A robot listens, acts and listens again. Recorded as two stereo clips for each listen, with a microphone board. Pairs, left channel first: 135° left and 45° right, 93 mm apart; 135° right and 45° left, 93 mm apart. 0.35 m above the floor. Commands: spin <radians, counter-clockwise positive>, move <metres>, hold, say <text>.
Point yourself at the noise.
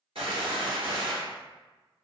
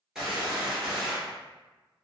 spin -0.70
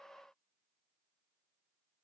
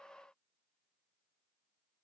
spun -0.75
say Facing where the gunshot came from. I can't hear it now.